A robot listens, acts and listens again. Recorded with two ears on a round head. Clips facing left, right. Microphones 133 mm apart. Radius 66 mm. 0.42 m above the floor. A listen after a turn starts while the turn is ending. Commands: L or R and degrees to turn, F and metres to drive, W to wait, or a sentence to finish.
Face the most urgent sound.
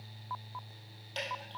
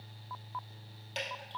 W
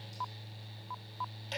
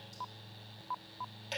W
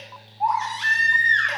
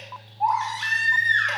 R30
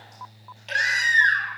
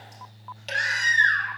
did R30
L25
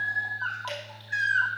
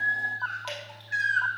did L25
Facing the baby crying.